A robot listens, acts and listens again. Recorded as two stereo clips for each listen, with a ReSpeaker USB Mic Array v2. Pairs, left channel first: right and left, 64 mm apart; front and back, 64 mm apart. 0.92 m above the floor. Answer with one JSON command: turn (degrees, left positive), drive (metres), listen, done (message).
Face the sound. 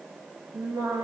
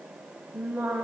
{"turn": 110}
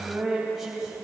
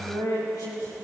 {"turn": 10}
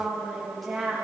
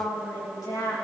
{"done": "Found it: singing, straight ahead."}